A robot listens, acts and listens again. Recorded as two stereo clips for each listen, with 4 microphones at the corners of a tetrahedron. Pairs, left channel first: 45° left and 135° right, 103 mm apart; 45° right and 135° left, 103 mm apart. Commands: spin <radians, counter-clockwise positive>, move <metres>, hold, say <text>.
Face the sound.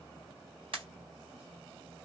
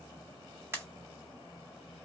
spin -2.79
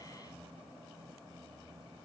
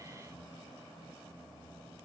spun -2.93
say I heard a pop from this way, but can't make it out now.